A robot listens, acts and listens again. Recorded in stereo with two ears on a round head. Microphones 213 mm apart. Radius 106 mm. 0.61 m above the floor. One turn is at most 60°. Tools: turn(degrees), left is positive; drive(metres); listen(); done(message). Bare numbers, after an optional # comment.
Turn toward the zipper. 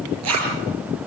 turn(-60)
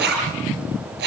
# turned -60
# So it is at 45° right.
turn(-45)
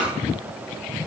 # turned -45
listen()
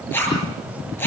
# The zipper is now 10° left.
turn(10)
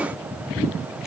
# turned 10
listen()
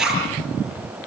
done("Found it: a zipper, straight ahead, over 4 m away.")